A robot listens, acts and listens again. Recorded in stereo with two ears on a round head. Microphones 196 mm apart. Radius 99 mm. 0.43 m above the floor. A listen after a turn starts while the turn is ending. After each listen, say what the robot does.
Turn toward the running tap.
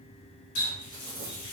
Turn 55° left.
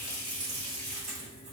Facing the running tap.